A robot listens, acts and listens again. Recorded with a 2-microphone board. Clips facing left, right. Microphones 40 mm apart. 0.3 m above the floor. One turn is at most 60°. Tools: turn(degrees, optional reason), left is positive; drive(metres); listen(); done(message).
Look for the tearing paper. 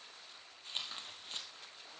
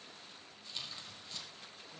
turn(degrees=45, reason="The tearing paper: about 45° left or 135° left.")
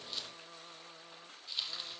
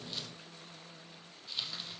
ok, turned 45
done("Found it: tearing paper, straight ahead, 1 to 2 m away.")